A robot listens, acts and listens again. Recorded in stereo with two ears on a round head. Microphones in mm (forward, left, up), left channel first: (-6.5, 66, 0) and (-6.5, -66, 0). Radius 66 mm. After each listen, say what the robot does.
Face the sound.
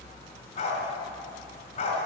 Turn 45° left.
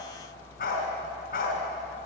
Turn 85° left.
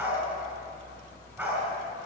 Turn 10° right.
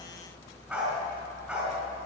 Facing the dog barking.